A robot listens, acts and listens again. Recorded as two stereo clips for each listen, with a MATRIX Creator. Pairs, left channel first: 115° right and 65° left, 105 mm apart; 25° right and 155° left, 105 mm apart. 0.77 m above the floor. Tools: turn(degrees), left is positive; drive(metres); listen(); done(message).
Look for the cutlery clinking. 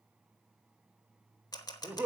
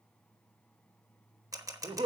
listen()
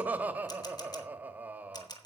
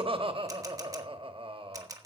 listen()
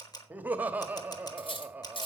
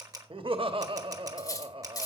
turn(degrees=-80)
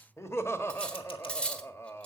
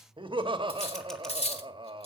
turn(degrees=-30)
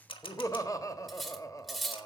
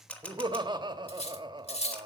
turn(degrees=-25)
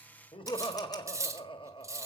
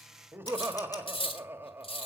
done("Found it: cutlery clinking, straight ahead, 1 to 2 m away.")